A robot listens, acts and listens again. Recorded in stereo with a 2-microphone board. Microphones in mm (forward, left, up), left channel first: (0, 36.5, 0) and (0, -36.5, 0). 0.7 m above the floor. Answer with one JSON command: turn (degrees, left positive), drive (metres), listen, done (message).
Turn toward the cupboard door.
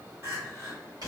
{"listen": true}
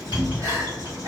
{"turn": -55}
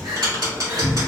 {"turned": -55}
{"done": "Found it: a cupboard door, straight ahead, 1 to 2 m away."}